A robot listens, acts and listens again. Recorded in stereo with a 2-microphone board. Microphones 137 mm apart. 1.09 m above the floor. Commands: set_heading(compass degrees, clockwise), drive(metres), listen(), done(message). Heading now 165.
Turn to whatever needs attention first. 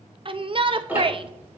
set_heading(205)
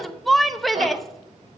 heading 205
done("Facing the shout, under 1 m away.")